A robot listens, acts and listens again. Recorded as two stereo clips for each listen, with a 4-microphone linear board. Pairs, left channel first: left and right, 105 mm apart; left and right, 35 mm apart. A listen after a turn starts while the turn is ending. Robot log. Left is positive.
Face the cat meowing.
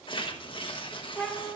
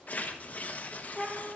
cmd yaw +30
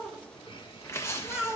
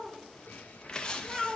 note: So it is at 10° right.
cmd yaw -10
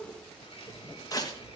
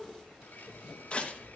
cmd idle
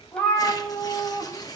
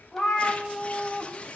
note: The cat meowing is now 15° left.
cmd yaw +15
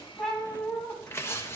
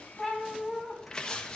end: Found it: a cat meowing, straight ahead, 2 to 4 m away.